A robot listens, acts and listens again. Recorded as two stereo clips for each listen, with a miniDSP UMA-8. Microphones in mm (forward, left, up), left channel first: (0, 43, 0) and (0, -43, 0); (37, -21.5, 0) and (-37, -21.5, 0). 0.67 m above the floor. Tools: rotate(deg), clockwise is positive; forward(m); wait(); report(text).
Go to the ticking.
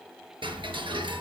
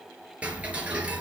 rotate(110)
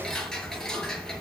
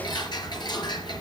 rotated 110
rotate(-10)
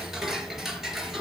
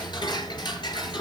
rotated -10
forward(1.0)
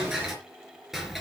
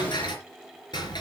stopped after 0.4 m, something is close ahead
report("Something is in my way. I am facing the ticking but have not reached it.")